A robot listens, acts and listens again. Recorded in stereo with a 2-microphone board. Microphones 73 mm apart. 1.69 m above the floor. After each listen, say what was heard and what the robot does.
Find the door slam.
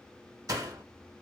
The door slam: about 50° right or 130° right. Turn 50° right.
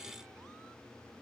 Keep listening.
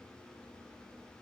I heard a door slam, but can't make it out now. It was about straight ahead or 80° right.